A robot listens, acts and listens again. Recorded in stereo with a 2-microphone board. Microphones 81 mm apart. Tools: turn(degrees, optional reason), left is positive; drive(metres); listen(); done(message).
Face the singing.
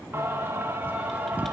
turn(degrees=-20, reason="The singing: about 20° right or 160° right.")
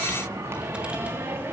turn(degrees=-25, reason="The singing: about 25° right or 155° right.")
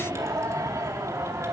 turn(degrees=-140, reason="So it is at 140° right.")
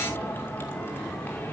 listen()
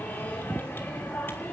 turn(degrees=20, reason="The singing is now 20° left.")
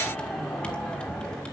listen()
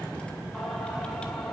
listen()
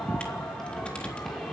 done("Facing where the singing came from. I can't hear it now.")